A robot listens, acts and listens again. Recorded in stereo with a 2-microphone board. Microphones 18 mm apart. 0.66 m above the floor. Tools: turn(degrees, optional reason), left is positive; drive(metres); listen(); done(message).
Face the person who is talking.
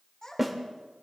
turn(degrees=30, reason="The child speaking: about 30° left or 150° left.")
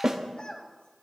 turn(degrees=115, reason="So it is at 115° left.")
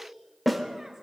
listen()
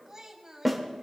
turn(degrees=-25, reason="The child speaking is now 25° right.")
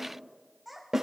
done("Facing the child speaking.")